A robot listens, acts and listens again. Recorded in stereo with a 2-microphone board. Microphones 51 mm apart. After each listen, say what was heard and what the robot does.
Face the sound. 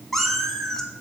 Turn 30° left.
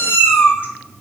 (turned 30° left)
So it is at 135° left. Turn 135° left.
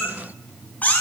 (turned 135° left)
The cat meowing is now 30° left. Turn 30° left.
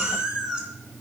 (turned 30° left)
The cat meowing is now 15° right. Turn 15° right.
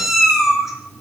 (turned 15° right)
Facing the cat meowing.